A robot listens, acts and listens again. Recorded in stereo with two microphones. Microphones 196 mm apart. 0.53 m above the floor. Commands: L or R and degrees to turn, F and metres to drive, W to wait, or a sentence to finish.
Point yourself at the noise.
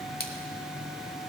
L50
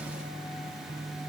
W
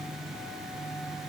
I heard a splash, but can't make it out now. It was about straight ahead or 80° left.